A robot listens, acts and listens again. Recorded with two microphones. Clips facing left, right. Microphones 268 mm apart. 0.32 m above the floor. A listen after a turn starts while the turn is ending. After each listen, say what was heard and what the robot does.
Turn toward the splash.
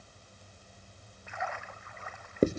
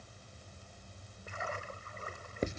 The splash: about 40° right or 140° right. Turn 40° right.
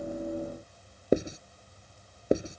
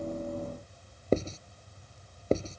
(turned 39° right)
Keep listening.
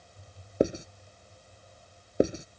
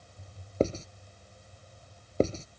I heard a splash, but can't make it out now. It was about straight ahead or 105° right.